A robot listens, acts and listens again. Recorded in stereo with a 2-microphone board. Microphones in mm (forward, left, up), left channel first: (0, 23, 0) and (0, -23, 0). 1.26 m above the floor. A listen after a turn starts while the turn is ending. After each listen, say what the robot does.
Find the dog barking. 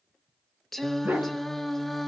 Turn 50° right.
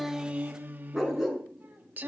Turn 10° right.
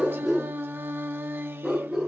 Turn 15° right.
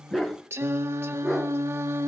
Found it: a dog barking, straight ahead, over 4 m away.